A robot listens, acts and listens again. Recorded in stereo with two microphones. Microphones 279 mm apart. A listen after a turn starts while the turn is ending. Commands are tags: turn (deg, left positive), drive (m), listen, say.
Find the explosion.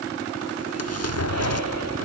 <turn deg="55"/>
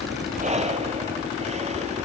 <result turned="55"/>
<listen/>
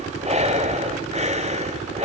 <say>I heard an explosion, but can't make it out now. It was about straight ahead or 70° left.</say>